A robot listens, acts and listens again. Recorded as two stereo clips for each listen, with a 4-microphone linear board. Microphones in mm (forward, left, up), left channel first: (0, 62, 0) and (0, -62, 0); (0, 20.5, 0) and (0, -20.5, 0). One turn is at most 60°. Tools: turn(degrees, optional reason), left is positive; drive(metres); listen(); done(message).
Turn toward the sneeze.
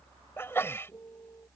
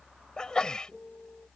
turn(degrees=20, reason="The sneeze: about 20° left or 160° left.")
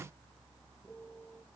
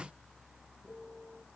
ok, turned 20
listen()
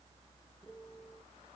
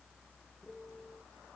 done("I heard a sneeze, but can't make it out now. It was about straight ahead or 140° left.")